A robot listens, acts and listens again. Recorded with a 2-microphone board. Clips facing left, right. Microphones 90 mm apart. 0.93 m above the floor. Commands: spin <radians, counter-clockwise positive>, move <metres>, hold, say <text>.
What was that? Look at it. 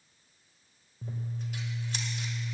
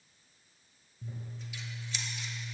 spin 0.87
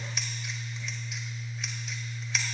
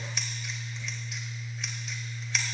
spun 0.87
say Facing the scissors, 1 to 2 m away.